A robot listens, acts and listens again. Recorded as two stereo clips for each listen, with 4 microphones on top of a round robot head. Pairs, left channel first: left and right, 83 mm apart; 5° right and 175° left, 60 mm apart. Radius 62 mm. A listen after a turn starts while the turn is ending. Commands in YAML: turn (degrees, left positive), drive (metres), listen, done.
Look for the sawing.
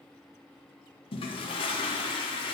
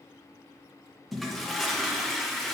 listen: true
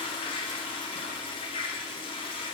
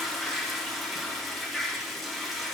listen: true
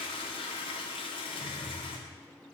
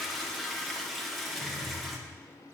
done: "I can't make out sawing to turn to."